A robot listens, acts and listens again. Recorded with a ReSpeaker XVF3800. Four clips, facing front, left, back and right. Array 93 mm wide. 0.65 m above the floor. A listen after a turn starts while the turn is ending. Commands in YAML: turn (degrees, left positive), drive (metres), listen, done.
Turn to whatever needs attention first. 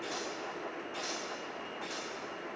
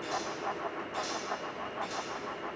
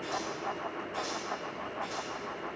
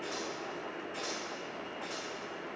listen: true
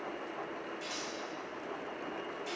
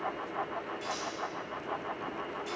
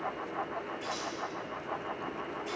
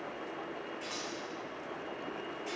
listen: true
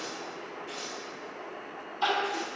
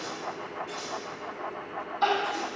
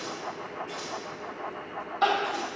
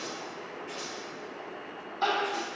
turn: -175
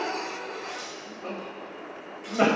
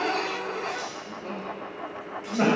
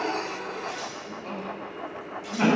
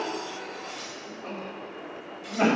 turn: 10
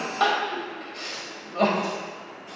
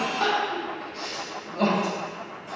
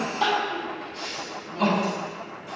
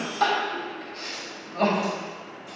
done: "Facing the crying."